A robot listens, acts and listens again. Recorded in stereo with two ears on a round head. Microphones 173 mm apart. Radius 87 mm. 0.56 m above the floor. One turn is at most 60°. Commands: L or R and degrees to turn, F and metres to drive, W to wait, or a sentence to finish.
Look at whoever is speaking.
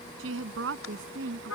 R60
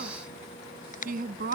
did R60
R50
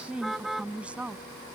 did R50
Facing the woman speaking.